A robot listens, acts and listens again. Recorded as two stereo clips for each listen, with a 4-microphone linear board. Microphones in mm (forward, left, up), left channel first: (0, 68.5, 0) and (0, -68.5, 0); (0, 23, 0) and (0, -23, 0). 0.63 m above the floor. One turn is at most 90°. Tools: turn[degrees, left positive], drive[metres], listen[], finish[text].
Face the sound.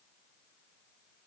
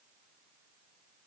Action: listen[]
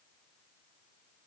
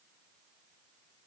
Action: listen[]
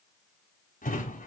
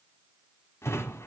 Action: turn[90]
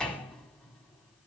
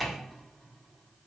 Action: finish[Facing the drawer, 1 to 2 m away.]